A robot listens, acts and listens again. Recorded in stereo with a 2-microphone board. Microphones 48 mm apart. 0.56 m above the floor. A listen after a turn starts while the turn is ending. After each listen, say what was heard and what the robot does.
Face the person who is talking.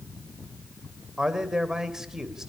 Turn 30° right.
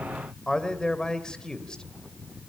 So it is at 15° left. Turn 15° left.
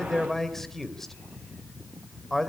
Facing the man speaking, 2 to 4 m away.